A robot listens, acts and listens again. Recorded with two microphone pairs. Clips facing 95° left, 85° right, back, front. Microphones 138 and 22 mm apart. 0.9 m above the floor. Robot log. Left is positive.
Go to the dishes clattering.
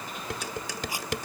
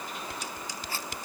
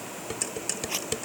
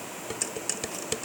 note: The dishes clattering: 90° left.
cmd yaw +90
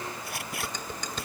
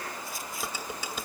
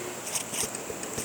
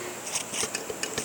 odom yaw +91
cmd fwd 1.0
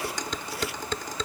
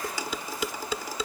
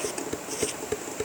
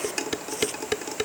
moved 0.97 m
cmd fwd 1.0
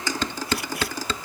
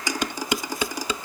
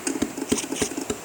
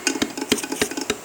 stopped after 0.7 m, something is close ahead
note: The dishes clattering is now 10° right.
cmd yaw -10
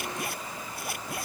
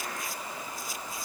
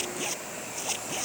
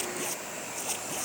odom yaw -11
cmd idle
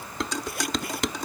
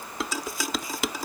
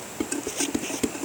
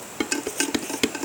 end: Arrived at the dishes clattering, straight ahead.